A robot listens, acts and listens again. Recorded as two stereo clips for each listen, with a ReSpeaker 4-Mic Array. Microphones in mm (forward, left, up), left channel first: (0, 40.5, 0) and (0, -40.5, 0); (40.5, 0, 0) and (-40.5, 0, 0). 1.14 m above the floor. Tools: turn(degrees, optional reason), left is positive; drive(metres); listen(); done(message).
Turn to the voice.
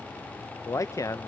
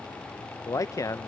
turn(degrees=45, reason="The man speaking: 45° left.")
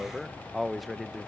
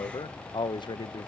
done("Found it: a man speaking, straight ahead.")